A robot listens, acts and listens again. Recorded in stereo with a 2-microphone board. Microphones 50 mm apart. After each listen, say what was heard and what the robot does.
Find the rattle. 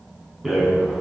Turn 30° right.
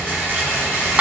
So it is at 150° right. Turn 150° right.
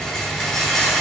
Found it: a rattle, straight ahead.